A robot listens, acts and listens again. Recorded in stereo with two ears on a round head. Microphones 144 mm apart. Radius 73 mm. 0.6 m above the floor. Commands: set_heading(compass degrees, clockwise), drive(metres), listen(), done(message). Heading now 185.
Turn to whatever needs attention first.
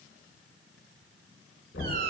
listen()
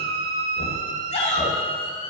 set_heading(140)
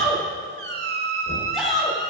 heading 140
done("Found it: a shout, straight ahead, 2 to 4 m away.")